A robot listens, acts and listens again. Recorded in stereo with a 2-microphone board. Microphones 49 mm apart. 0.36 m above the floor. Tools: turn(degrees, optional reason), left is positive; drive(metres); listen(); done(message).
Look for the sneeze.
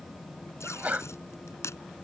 turn(degrees=-35, reason="The sneeze: about 35° right or 145° right.")
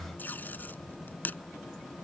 listen()
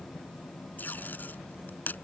done("I heard a sneeze, but can't make it out now. It was about straight ahead or 110° right.")